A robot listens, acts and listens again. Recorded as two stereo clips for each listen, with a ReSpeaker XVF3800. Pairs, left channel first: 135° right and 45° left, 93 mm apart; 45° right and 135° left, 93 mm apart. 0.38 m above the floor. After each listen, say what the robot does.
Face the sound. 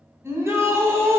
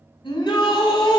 Turn 15° right.
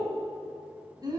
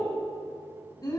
Found it: a shout, straight ahead, 2 to 4 m away.